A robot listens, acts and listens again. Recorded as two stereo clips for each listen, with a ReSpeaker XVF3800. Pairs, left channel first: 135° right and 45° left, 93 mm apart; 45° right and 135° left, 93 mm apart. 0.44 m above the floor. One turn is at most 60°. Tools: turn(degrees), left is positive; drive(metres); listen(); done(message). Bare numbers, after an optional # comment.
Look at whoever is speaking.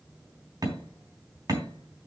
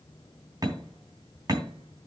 listen()
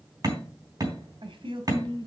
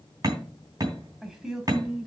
# The woman speaking: 55° left.
turn(55)
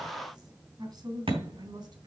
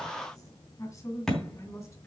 # The woman speaking is now 10° left.
turn(10)
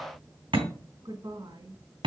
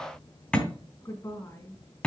done("Facing the woman speaking.")